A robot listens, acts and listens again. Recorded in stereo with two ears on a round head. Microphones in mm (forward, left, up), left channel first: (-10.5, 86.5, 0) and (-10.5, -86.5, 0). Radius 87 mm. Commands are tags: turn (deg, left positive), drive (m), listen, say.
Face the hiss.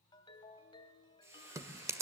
<turn deg="-30"/>
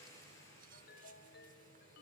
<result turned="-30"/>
<turn deg="15"/>
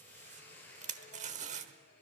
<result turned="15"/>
<turn deg="10"/>
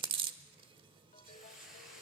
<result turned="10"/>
<say>Facing the hiss.</say>